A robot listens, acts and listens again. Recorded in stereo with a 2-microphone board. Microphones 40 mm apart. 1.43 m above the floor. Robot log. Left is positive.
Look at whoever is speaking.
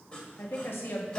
cmd yaw +90
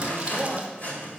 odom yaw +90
end: Found it: a woman speaking, straight ahead, 1 to 2 m away.